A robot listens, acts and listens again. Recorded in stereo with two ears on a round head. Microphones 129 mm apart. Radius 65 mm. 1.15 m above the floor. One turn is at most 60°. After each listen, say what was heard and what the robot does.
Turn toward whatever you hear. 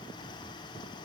Keep listening.
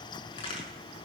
The crack: about 40° left or 140° left. Turn 40° left.
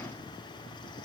Keep listening.
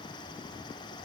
I heard a crack, but can't make it out now. It was about straight ahead or 100° left.